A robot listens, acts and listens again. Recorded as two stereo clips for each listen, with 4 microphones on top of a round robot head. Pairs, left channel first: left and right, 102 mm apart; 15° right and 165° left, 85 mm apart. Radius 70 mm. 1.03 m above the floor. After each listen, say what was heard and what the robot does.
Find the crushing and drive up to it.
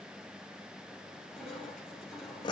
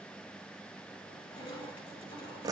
Drive 1.0 m forward.
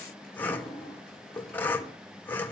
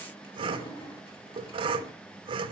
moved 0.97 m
Drive 1.0 m forward.
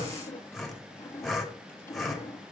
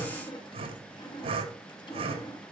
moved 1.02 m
The crushing is now 15° left. Turn 15° left.
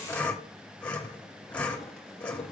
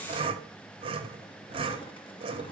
Keep listening.
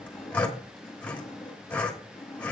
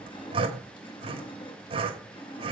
Drive 1.0 m forward.
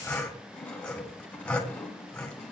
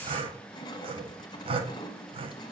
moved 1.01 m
The crushing is now 10° left. Turn 10° left.
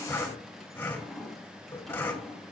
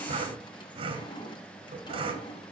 Drive 1.0 m forward.
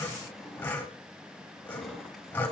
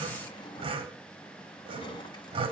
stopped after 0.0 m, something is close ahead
I am next to the crushing.